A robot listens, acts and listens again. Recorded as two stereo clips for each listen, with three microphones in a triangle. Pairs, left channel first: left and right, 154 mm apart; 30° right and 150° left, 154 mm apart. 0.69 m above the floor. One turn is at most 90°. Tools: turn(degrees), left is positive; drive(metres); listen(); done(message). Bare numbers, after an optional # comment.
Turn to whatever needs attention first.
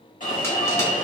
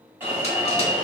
# The alarm: 75° left.
turn(75)
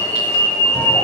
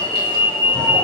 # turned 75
# The alarm is now 15° left.
turn(15)
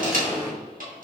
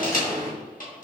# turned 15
done("Facing the alarm.")